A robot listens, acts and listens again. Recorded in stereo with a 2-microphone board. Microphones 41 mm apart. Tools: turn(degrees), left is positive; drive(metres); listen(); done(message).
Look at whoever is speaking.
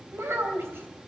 turn(degrees=-90)
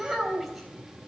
done("Found it: a child speaking, straight ahead.")